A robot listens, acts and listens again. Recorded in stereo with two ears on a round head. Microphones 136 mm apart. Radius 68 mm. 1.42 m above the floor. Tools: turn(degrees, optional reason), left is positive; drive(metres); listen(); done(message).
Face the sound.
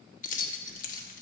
turn(degrees=55, reason="The keys jangling: about 55° left or 125° left.")
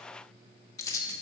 turn(degrees=25, reason="So it is at 25° left.")
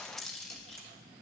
done("Found it: keys jangling, straight ahead, 1 to 2 m away.")